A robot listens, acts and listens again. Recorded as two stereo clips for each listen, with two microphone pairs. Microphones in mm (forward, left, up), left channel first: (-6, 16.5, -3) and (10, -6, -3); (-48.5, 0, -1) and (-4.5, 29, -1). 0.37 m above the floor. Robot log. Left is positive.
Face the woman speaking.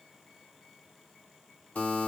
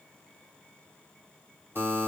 cmd idle
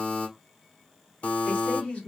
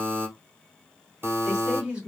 note: The woman speaking: 100° left.
cmd yaw +100
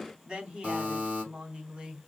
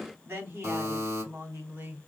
note: The woman speaking is now 10° right.
cmd yaw -10
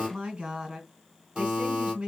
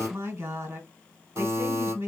end: Facing the woman speaking.